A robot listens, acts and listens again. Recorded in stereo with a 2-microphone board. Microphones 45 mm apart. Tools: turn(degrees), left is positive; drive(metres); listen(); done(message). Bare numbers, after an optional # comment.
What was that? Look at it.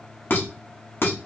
# The dishes clattering: about 60° left or 120° left.
turn(60)
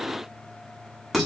done("Found it: dishes clattering, straight ahead.")